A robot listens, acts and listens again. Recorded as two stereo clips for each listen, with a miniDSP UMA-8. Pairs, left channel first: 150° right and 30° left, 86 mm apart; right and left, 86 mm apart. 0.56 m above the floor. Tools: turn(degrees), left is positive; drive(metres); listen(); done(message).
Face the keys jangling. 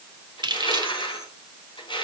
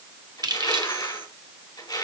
turn(degrees=60)
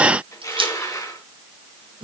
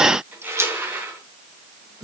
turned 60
turn(degrees=50)
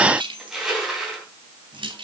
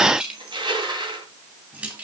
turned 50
turn(degrees=20)
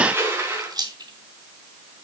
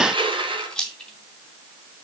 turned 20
done("Found it: keys jangling, straight ahead.")